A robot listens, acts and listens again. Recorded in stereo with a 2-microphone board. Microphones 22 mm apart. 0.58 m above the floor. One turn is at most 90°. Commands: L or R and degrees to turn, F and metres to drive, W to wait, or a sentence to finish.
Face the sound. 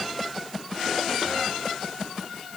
W
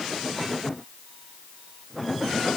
W
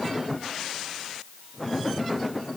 I can't make out anything to turn to.